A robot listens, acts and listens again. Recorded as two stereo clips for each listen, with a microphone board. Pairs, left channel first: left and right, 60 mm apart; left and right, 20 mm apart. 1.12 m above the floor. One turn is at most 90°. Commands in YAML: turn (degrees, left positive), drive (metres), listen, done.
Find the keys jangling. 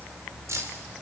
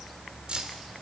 turn: -55
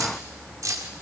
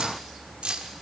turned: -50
turn: -70
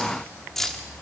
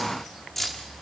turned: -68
done: "Facing the keys jangling."